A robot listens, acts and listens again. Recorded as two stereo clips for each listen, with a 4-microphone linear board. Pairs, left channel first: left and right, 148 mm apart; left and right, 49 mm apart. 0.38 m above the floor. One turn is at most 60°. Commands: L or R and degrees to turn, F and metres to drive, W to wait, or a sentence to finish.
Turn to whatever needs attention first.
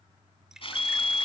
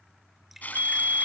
R55
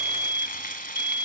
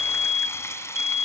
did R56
R15
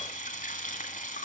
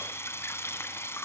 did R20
W
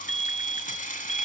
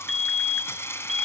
Facing the fire alarm.